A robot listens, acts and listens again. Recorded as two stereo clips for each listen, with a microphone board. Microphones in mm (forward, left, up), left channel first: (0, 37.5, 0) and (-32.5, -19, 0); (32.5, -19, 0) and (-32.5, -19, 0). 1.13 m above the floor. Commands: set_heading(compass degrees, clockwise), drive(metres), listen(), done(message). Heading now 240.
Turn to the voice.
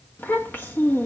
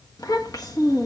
done("Facing the child speaking.")